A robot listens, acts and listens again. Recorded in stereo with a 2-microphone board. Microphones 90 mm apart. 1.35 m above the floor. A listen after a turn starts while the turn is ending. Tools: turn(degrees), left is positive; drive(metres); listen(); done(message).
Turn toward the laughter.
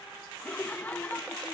turn(degrees=20)
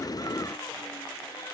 listen()
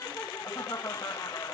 turn(degrees=140)
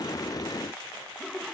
done("Facing the laughter.")